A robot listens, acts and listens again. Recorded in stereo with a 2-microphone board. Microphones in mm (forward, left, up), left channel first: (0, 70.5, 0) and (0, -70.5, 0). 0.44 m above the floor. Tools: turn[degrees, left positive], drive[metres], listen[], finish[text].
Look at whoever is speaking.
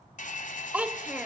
Action: turn[-30]
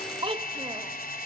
Thought: So it is at 140° right.
Action: turn[-140]
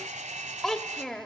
Action: finish[Found it: a child speaking, straight ahead, 1 to 2 m away.]